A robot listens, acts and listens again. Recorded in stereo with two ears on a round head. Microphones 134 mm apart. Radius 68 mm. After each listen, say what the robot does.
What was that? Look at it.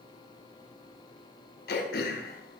Turn 65° left.
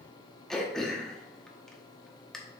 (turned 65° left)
Found it: throat clearing, straight ahead, under 1 m away.